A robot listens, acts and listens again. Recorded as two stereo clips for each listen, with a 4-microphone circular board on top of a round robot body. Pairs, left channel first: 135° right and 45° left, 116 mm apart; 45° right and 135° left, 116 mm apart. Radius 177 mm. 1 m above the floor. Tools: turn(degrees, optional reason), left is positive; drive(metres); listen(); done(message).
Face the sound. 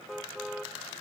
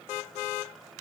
listen()
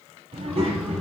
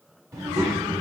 turn(degrees=75, reason="The child speaking: 75° left.")
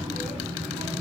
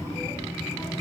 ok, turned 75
turn(degrees=20, reason="The child speaking is now 20° left.")
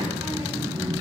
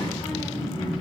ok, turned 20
done("Found it: a child speaking, straight ahead.")